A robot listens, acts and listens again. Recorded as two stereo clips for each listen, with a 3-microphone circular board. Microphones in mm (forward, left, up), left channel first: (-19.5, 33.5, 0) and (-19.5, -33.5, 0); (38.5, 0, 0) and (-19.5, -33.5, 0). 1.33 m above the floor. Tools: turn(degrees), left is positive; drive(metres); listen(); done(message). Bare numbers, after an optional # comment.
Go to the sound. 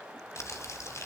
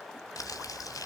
# The crumpling: 50° left.
turn(50)
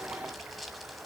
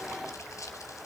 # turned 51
drive(1.0)
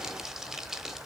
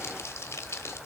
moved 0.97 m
# The crumpling is now 10° right.
turn(-10)
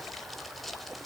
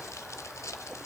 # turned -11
drive(1.0)
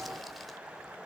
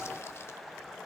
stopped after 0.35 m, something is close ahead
listen()
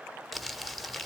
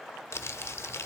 done("I am next to the crumpling.")